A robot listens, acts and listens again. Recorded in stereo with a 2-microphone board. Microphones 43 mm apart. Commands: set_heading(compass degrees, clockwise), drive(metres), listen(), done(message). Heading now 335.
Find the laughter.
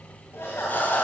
set_heading(275)
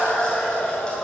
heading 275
set_heading(250)
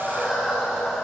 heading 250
done("Found it: laughter, straight ahead.")